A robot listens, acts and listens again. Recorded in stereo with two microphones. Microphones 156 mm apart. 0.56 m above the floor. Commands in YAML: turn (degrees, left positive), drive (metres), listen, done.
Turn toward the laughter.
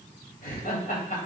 turn: 60
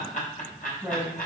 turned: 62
turn: 65
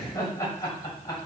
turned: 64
turn: 25
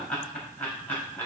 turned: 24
turn: 15
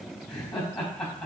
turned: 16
done: "Facing the laughter, 2 to 4 m away."